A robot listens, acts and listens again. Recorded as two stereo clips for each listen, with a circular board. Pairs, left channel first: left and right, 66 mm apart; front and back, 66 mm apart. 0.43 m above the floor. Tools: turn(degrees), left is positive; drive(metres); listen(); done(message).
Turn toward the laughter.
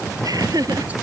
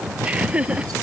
turn(degrees=-110)
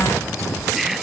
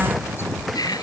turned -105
done("Found it: laughter, straight ahead.")